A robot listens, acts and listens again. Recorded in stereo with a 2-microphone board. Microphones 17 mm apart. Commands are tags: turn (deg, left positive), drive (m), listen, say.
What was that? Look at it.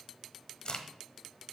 <turn deg="60"/>
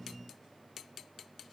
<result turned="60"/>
<listen/>
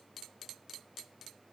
<say>I heard a crack, but can't make it out now. It was about straight ahead or 60° left.</say>